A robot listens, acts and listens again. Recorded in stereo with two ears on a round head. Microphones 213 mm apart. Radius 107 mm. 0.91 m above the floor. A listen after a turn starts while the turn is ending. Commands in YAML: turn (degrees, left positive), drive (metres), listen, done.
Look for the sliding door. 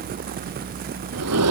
turn: -90
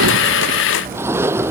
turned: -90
turn: -10
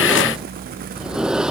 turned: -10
done: "Found it: a sliding door, straight ahead."